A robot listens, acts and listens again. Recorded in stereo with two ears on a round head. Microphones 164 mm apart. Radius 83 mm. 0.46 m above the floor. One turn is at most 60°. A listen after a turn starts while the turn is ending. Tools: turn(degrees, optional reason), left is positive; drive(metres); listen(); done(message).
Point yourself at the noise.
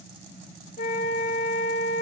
turn(degrees=50, reason="The flute: about 50° left or 130° left.")
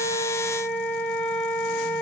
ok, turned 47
turn(degrees=10, reason="So it is at 10° left.")
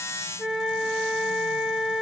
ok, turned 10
done("Found it: a flute, straight ahead.")